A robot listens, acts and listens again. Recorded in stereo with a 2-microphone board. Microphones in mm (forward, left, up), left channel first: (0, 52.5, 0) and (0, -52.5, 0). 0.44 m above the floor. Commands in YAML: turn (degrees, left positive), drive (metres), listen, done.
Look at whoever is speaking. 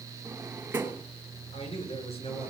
turn: 60
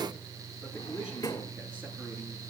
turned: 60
listen: true
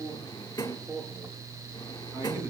turn: -20
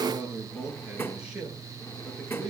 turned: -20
done: "Facing the man speaking, over 4 m away."